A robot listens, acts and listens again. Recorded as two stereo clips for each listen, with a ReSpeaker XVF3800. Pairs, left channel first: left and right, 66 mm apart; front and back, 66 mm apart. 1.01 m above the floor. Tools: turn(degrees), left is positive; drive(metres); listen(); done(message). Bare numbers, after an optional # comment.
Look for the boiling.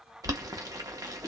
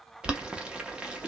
# The boiling: 105° right.
turn(-105)
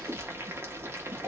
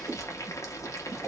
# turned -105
# The boiling is now 40° right.
turn(-40)
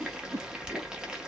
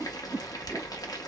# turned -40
# The boiling is now 10° right.
turn(-10)
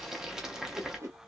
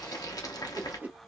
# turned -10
# The boiling is now 10° right.
turn(-10)
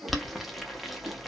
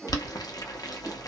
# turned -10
done("Found it: boiling, straight ahead, under 1 m away.")